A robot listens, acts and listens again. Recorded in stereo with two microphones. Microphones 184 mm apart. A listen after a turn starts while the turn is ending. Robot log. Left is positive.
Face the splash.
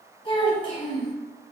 cmd idle
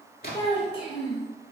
note: The splash: about 50° left or 130° left.
cmd yaw +50
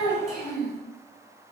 cmd idle
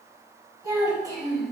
end: I heard a splash, but can't make it out now. It was about straight ahead or 80° left.